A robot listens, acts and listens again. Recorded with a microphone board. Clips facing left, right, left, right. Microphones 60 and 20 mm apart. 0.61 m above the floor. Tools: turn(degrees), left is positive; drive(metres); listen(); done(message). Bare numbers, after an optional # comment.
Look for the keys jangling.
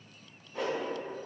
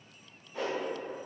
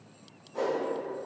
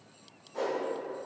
listen()
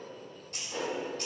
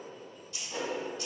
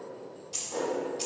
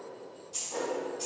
# The keys jangling: about 55° left or 125° left.
turn(55)
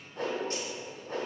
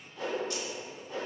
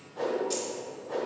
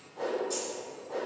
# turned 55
listen()
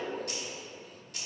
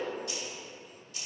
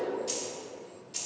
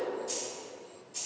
# So it is at 65° left.
turn(65)
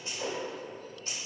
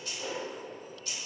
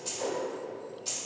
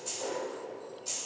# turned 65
# The keys jangling is now 40° left.
turn(40)
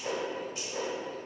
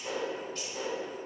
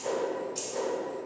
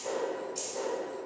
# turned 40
listen()
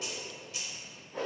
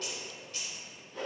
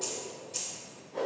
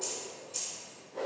# The keys jangling is now 20° left.
turn(20)
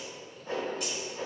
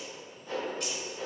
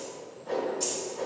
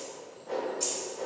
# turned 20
listen()
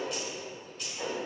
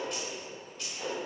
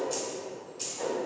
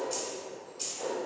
done("Found it: keys jangling, straight ahead, 2 to 4 m away.")